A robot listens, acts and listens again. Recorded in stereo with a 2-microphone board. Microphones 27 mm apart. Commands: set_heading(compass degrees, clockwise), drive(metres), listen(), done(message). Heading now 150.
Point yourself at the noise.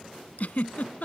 set_heading(85)
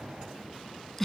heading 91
done("Found it: a giggle, straight ahead.")